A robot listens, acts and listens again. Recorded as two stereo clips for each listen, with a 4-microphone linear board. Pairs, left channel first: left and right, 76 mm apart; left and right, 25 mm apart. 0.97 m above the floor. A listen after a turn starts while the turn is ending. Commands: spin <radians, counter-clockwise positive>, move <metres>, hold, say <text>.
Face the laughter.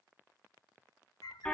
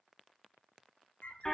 hold
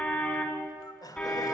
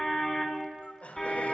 spin 1.13
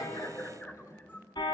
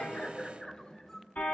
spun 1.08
spin 0.79
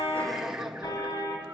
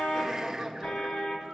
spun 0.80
spin -0.17
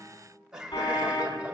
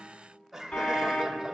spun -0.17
spin -0.17
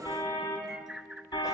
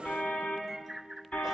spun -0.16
hold
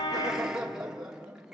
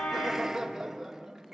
spin -0.17
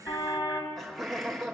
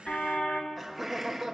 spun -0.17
say Facing the laughter.